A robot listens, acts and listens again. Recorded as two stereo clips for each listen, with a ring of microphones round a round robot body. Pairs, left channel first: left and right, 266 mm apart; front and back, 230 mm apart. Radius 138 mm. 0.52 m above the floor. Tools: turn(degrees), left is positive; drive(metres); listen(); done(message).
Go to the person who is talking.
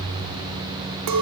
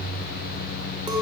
listen()
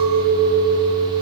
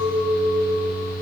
listen()
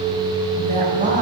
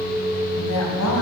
turn(degrees=-30)
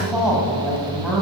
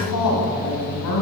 drive(metres=1.0)
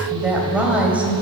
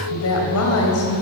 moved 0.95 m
drive(metres=1.0)
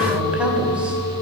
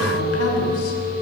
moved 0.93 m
listen()
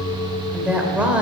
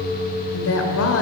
drive(metres=1.0)
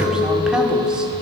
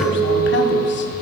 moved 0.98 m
listen()
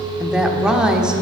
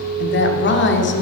drive(metres=1.0)
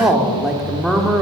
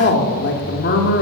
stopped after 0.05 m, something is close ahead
done("Arrived at the woman speaking, straight ahead.")